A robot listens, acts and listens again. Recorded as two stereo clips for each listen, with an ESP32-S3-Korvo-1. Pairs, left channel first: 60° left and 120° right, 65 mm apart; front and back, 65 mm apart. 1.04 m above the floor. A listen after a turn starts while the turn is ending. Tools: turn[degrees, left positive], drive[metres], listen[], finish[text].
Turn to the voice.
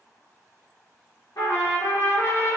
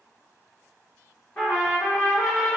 Action: listen[]
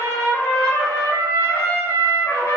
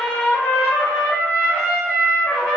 Action: listen[]
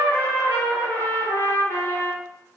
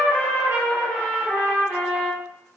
Action: finish[I can't make out anyone speaking, only a trumpet.]